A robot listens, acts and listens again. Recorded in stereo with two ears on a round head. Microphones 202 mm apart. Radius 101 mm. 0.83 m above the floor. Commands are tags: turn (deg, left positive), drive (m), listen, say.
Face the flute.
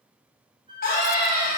<turn deg="-20"/>
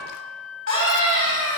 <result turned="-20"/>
<say>Found it: a flute, straight ahead.</say>